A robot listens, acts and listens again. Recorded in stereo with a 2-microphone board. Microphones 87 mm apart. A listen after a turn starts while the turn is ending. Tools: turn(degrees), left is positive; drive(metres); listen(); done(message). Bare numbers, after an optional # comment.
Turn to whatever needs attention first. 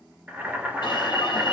# The alarm: about 65° left or 115° left.
turn(65)
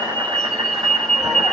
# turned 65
done("Found it: an alarm, straight ahead, 2 to 4 m away.")